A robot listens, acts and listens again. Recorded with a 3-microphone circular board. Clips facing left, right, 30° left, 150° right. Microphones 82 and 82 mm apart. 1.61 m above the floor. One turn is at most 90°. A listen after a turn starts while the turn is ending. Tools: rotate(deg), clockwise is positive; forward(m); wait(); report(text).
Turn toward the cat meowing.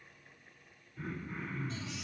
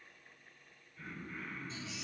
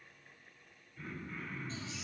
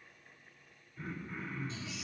wait()
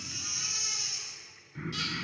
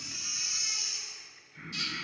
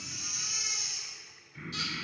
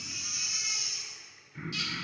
wait()
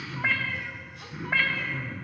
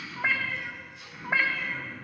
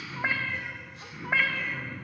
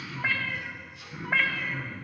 rotate(55)
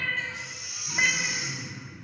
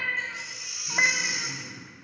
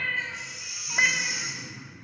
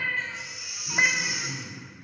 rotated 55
wait()
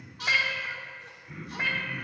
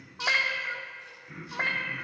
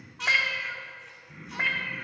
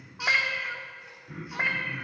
rotate(80)
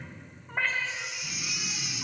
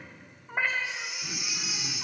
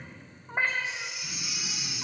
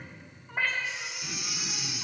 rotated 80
rotate(15)
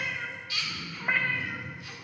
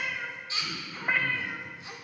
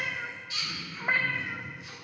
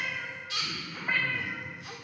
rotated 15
report("Facing the cat meowing, 1 to 2 m away.")